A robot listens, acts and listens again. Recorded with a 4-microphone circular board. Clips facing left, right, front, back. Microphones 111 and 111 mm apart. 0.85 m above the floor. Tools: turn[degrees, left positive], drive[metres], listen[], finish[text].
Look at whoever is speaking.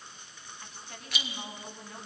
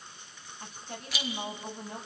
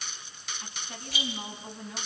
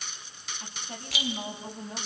Thought: The woman speaking: 135° right.
Action: turn[-135]
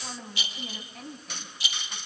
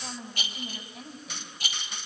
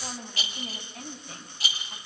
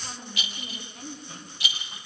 Action: finish[Found it: a woman speaking, straight ahead, over 4 m away.]